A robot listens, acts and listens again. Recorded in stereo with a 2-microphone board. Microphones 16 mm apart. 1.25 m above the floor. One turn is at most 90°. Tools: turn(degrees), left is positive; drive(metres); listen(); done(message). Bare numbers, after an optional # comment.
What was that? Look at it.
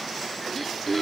# The throat clearing: about 15° left or 165° left.
turn(15)
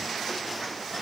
listen()
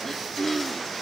# So it is at 150° left.
turn(90)
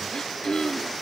# The throat clearing is now 60° left.
turn(60)
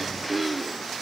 # The throat clearing is now 15° right.
turn(-15)
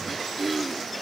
done("Facing the throat clearing.")